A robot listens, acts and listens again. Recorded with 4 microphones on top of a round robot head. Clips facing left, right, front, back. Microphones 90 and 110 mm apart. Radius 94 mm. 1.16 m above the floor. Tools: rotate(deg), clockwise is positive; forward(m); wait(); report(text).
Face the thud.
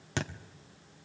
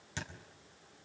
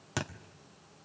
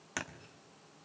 rotate(-70)
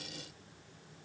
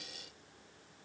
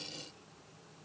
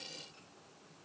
report("I heard a thud from this way, but can't make it out now.")